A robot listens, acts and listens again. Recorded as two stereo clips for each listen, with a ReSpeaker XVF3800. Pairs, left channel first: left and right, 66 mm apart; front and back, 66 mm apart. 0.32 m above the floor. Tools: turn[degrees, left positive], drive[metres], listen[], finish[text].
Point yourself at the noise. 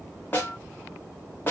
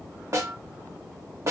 Thought: The snare drum: 145° left.
Action: turn[145]
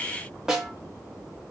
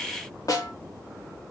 Action: finish[Facing the snare drum, 1 to 2 m away.]